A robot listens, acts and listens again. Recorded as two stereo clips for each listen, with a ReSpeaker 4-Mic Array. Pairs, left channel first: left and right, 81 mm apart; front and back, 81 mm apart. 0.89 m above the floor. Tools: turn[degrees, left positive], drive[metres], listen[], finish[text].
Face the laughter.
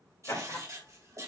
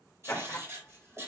Thought: The laughter: 65° left.
Action: turn[65]
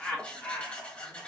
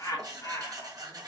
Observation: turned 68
Thought: The laughter is now 30° left.
Action: turn[30]
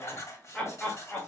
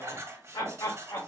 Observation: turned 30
Thought: The laughter is now 25° left.
Action: turn[25]
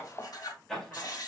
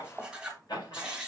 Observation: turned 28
Thought: The laughter is now 10° left.
Action: turn[10]
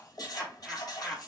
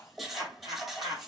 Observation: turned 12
Action: finish[Facing the laughter, 2 to 4 m away.]